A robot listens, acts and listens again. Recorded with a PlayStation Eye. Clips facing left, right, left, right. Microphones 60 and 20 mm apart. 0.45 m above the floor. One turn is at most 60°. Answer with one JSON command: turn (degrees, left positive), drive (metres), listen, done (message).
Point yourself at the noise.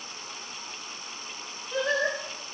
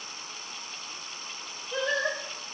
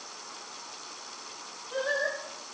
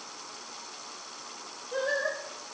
{"turn": 30}
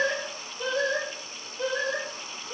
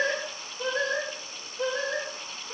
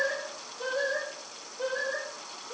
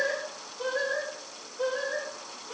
{"turn": -35}
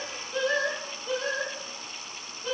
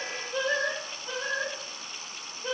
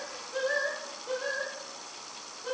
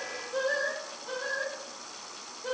{"turn": -15}
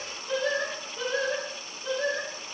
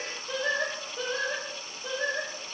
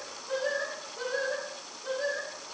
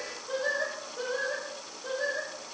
{"done": "Found it: singing, straight ahead."}